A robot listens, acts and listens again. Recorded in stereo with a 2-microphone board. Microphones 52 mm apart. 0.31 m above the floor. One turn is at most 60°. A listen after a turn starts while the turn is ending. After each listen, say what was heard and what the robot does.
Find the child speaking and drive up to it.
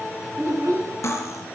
The child speaking: about 60° right or 120° right. Turn 60° right.
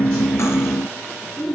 Drive 1.0 m forward.
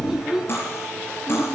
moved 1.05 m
Drive 1.0 m forward.
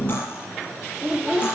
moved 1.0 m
The child speaking is now 15° right. Turn 15° right.
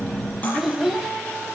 Drive 1.0 m forward.
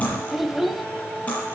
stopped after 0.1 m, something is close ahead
I am next to the child speaking.